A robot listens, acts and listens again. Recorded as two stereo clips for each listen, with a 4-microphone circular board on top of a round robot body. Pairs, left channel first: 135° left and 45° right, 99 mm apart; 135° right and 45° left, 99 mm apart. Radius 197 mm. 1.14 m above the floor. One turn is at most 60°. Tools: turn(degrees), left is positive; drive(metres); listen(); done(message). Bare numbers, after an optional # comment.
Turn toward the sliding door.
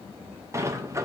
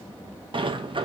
# The sliding door: 15° left.
turn(15)
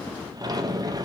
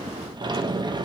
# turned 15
done("Found it: a sliding door, straight ahead, under 1 m away.")